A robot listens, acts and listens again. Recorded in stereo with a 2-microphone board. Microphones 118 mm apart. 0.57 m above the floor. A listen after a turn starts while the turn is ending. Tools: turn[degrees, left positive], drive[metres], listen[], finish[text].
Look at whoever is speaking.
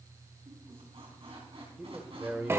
Thought: The man speaking: about 15° right or 165° right.
Action: turn[-15]
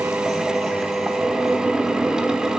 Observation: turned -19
Action: listen[]
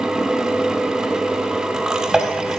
Action: listen[]
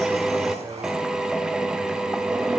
Action: finish[I heard a man speaking, but can't make it out now. It was about 5° left or 145° right.]